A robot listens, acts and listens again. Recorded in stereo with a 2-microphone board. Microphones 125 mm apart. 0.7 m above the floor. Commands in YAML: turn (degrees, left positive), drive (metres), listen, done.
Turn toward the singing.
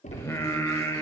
turn: 20
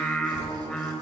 done: "Found it: singing, straight ahead."